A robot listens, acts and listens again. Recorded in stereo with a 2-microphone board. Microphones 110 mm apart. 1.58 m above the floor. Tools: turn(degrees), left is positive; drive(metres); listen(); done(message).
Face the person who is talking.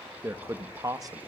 turn(degrees=-35)
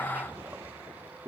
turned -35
turn(degrees=-25)
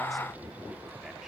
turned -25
listen()
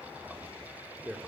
turn(degrees=-10)
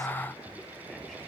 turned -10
listen()
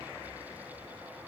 listen()
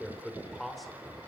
done("Found it: a man speaking, straight ahead.")